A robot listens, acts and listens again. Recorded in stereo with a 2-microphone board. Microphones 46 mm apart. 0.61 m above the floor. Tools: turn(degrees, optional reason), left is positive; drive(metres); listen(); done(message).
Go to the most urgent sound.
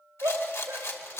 turn(degrees=-90)
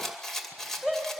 drive(metres=1.0)
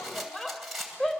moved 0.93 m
turn(degrees=10, reason="The shout is now 10° left.")
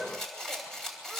listen()
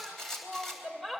drive(metres=1.0)
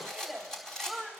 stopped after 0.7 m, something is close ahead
done("Arrived at the shout, straight ahead.")